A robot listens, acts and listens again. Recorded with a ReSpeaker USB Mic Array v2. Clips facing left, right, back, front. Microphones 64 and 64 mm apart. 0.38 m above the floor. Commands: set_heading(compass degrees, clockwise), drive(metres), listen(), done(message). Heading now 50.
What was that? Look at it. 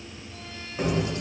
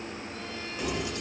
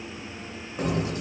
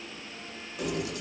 set_heading(270)
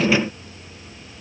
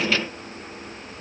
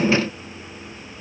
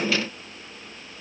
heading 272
listen()
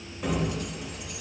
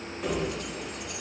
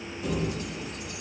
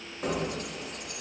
done("Found it: keys jangling, straight ahead, under 1 m away.")